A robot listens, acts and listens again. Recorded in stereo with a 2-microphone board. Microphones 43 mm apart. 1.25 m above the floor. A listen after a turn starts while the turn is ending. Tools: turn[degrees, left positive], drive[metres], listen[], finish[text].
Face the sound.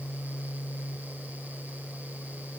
Action: listen[]
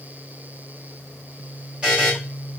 Thought: The buzzer: about 25° right or 155° right.
Action: turn[-25]
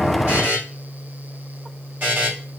Thought: So it is at 130° right.
Action: turn[-130]
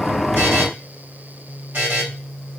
Thought: The buzzer is now 40° right.
Action: turn[-40]
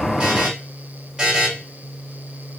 Thought: The buzzer is now 15° right.
Action: turn[-15]
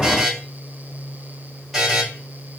Action: finish[Found it: a buzzer, straight ahead, 1 to 2 m away.]